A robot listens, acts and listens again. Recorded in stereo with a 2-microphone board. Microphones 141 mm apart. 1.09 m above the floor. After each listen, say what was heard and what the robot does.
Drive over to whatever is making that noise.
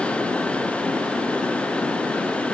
Keep listening.
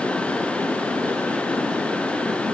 Keep listening.
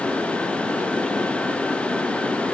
I can't make out anything to turn to.